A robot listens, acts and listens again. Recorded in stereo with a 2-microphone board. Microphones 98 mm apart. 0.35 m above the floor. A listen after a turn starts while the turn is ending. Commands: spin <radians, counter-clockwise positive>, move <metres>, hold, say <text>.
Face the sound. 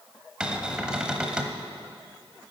spin -0.52
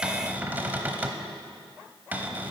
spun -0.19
spin -0.35
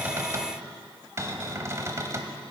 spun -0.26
spin -2.53
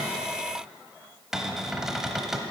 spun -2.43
say Found it: a cupboard door, straight ahead, 1 to 2 m away.